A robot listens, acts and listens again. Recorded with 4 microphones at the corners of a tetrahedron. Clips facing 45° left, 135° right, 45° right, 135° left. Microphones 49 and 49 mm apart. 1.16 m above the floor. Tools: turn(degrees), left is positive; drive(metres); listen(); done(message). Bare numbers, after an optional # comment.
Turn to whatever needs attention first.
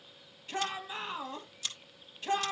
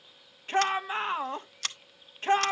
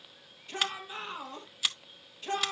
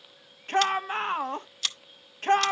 # The shout: 175° left.
turn(175)
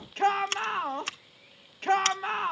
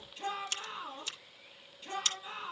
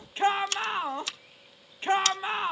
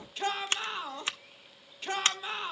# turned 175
# The shout is now 15° left.
turn(15)
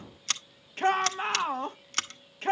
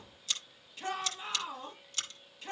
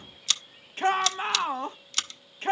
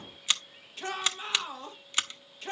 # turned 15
done("Facing the shout.")